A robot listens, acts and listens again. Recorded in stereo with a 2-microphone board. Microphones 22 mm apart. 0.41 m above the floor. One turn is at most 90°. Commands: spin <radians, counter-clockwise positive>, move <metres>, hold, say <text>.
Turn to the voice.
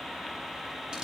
hold
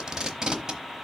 hold
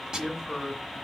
spin -0.52
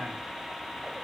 hold
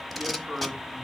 spin -1.57
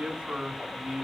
spin -0.96
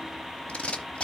hold
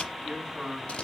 spin -0.35
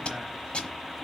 hold
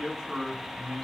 say Facing the man speaking.